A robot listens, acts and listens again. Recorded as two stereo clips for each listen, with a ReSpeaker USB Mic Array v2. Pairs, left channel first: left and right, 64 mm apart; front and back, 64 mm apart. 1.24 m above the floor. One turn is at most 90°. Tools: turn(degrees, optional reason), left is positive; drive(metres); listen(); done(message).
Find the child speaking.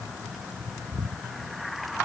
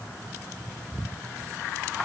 listen()
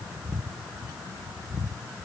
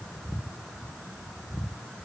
listen()
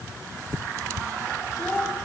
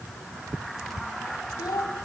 turn(degrees=15, reason="The child speaking: 15° left.")
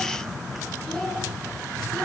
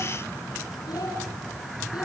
turn(degrees=10, reason="The child speaking is now 10° left.")
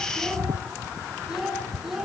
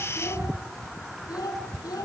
done("Found it: a child speaking, straight ahead, over 4 m away.")